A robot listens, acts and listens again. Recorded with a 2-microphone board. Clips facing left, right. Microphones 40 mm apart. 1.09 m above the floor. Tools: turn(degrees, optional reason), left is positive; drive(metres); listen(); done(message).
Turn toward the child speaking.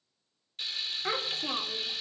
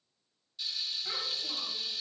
turn(degrees=90)
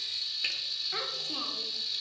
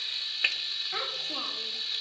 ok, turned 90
done("Facing the child speaking, 2 to 4 m away.")